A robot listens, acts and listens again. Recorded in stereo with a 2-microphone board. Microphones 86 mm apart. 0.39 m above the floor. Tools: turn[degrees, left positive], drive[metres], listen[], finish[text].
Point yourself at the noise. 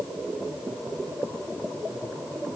Action: listen[]
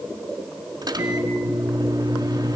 Thought: The microwave: about 60° right or 120° right.
Action: turn[-60]
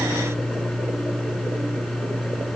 Action: finish[Found it: a microwave, straight ahead.]